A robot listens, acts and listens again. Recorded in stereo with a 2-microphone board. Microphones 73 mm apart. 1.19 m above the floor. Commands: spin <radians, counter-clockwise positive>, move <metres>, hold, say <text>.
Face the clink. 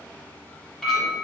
spin 0.52
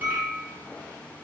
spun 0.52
spin -0.44
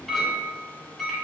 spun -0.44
say Facing the clink, 1 to 2 m away.